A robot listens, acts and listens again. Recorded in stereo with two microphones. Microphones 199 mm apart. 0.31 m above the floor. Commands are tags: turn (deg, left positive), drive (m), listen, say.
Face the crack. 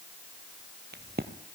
<turn deg="-55"/>
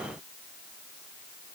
<listen/>
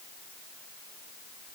<say>I heard a crack, but can't make it out now. It was about straight ahead or 70° right.</say>